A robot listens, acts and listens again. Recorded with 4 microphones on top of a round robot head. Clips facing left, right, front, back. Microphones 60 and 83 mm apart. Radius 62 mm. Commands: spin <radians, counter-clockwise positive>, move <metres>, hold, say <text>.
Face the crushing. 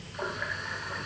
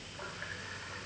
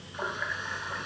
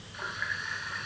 hold
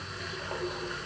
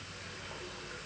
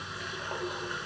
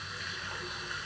hold
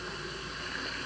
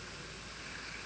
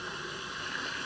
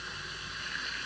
say I can't make out crushing to turn to.